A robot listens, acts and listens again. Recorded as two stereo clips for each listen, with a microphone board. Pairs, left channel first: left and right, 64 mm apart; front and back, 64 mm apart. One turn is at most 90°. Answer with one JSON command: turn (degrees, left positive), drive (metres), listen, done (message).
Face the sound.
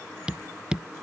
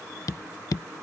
{"turn": -15}
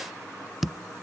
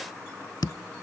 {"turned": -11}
{"done": "Found it: tapping, straight ahead."}